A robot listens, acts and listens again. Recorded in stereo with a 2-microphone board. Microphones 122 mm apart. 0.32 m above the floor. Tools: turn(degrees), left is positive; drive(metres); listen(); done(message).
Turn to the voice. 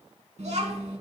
turn(degrees=-70)
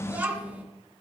turn(degrees=-15)
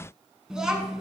done("Found it: a child speaking, straight ahead, 2 to 4 m away.")